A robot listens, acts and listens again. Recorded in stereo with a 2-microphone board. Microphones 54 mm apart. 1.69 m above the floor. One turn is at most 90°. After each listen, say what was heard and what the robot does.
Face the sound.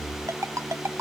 The ringtone: about 65° right or 115° right. Turn 65° right.
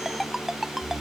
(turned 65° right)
Found it: a ringtone, straight ahead.